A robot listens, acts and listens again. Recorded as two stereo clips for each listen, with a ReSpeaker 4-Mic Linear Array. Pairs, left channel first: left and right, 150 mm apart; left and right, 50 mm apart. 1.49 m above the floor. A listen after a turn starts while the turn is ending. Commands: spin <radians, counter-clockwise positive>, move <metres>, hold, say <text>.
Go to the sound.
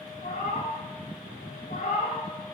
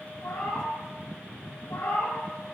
spin 1.22
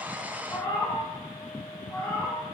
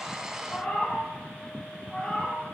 spin 0.35
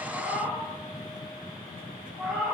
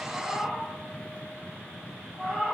move 1.0
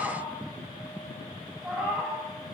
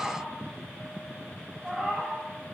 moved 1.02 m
move 1.0
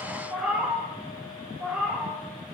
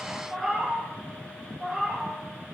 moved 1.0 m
spin -0.17
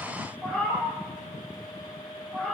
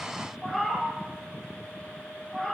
move 1.0
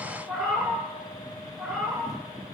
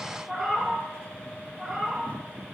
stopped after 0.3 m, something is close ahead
say Arrived at the cat meowing, straight ahead.